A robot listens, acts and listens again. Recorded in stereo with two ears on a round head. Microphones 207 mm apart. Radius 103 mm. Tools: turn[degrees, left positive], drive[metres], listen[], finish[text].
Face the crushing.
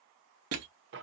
Thought: The crushing: about 70° right or 110° right.
Action: turn[-70]
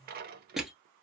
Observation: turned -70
Action: finish[Facing the crushing.]